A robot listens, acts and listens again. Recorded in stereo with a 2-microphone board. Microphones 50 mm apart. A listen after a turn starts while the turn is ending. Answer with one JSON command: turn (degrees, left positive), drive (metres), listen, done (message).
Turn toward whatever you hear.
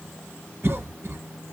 {"turn": -60}
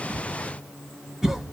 {"turn": -15}
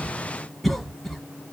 {"done": "Facing the cough."}